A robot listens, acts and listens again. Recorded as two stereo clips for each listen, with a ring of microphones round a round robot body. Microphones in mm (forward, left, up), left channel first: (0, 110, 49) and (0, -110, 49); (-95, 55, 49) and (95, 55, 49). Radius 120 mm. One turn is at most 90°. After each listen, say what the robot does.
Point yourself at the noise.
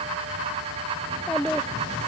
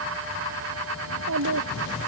Found it: a child speaking, straight ahead.